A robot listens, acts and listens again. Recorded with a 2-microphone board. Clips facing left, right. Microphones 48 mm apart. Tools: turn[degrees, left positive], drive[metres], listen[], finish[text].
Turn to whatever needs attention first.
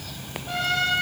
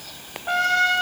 Action: listen[]
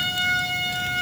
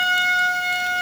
Action: listen[]
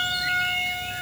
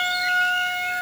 Action: finish[I can't make out anything urgent, only a trumpet.]